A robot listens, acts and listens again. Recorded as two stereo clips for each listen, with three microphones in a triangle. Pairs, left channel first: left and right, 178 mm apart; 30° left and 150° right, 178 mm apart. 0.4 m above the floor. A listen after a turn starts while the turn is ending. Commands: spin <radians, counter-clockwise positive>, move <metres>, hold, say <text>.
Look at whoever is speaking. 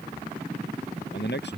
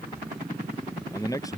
spin 1.75
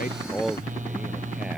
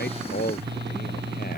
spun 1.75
say Facing the man speaking.